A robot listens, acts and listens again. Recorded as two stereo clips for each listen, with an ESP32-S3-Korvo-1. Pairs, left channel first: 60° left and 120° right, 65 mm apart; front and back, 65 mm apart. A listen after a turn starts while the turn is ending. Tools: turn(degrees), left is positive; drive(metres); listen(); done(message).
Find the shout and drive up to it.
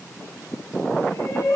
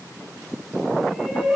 turn(degrees=95)
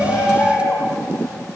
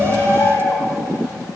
drive(metres=1.0)
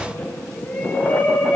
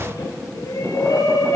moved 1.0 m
drive(metres=1.0)
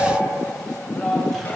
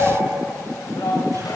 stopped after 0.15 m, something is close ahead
turn(degrees=-10)
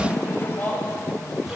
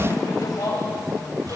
done("Blocked. The shout is further on, straight ahead.")